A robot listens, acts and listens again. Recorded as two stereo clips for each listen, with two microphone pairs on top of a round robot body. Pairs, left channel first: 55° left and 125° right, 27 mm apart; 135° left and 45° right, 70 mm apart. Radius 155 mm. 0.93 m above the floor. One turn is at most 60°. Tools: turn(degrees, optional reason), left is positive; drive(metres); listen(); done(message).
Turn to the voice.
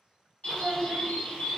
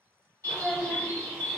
turn(degrees=-60, reason="The child speaking: 125° right.")
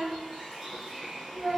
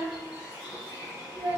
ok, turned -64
turn(degrees=-60, reason="The child speaking is now 60° right.")
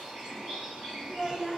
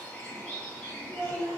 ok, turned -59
done("Found it: a child speaking, straight ahead, 1 to 2 m away.")